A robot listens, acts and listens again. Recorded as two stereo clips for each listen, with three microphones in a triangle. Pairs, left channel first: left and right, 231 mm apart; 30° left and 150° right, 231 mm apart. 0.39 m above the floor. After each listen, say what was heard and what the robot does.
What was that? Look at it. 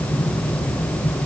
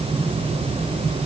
Keep listening.
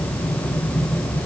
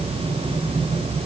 Keep listening.
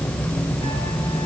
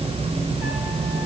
I can't make out anything.